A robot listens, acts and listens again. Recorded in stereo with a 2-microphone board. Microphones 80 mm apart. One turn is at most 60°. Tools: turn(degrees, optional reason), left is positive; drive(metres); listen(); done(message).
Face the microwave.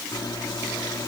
turn(degrees=60, reason="The microwave: about 60° left or 120° left.")
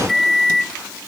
done("Facing the microwave.")